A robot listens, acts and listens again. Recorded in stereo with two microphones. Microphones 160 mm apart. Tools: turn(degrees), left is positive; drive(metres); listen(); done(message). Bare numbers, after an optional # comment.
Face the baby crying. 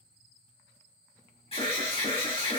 listen()
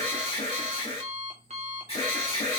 listen()
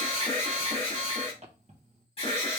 done("I can't make out a baby crying, only an alarm and an alarm clock.")